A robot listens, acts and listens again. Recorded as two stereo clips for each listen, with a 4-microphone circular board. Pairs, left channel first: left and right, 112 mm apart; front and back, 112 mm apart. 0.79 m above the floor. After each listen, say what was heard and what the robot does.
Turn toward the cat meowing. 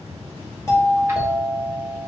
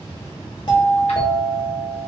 Keep listening.
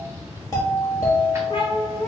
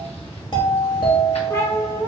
The cat meowing: 45° left. Turn 45° left.
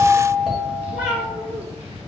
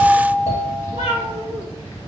The cat meowing is now 20° right. Turn 20° right.
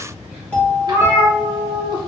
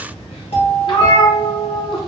The cat meowing is now 10° right. Turn 10° right.
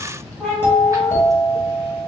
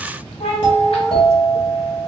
Found it: a cat meowing, straight ahead, 2 to 4 m away.